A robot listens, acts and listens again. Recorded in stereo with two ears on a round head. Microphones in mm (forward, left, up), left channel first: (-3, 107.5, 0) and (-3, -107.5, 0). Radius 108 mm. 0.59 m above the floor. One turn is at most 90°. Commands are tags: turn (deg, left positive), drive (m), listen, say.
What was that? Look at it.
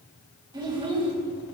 <turn deg="-25"/>
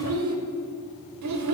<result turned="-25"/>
<turn deg="-90"/>
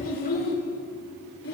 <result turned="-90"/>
<turn deg="50"/>
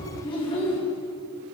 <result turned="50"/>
<turn deg="25"/>
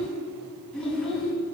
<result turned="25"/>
<say>Facing the child speaking, 2 to 4 m away.</say>